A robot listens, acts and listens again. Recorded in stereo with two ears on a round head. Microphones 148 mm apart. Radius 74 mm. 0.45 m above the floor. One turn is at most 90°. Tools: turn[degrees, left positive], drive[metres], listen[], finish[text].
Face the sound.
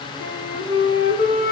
Thought: The flute: about 65° left or 115° left.
Action: turn[65]
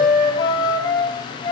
Thought: So it is at 30° left.
Action: turn[30]
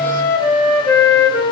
Thought: The flute is now 20° left.
Action: turn[20]
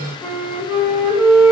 Action: finish[Found it: a flute, straight ahead, 2 to 4 m away.]